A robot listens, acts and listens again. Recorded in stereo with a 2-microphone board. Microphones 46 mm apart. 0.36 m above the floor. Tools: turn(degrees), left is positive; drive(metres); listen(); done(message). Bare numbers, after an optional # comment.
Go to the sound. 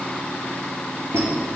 # The squeak: about 70° right or 110° right.
turn(-70)
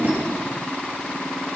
listen()
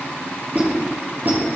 # So it is at 40° right.
turn(-40)
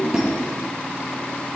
# The squeak is now 15° right.
turn(-15)
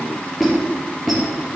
drive(1.0)
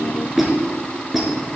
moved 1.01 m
drive(1.0)
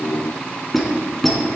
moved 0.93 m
drive(1.0)
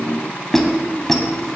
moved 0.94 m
# The squeak is now 10° left.
turn(10)
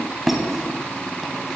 drive(1.0)
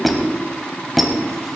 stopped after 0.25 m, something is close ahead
done("I am next to the squeak.")